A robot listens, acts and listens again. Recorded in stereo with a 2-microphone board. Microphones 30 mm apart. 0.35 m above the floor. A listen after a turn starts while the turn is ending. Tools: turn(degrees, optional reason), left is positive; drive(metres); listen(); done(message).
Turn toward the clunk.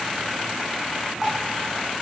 listen()
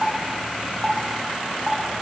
listen()
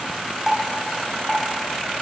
done("I can't make out a clunk to turn to.")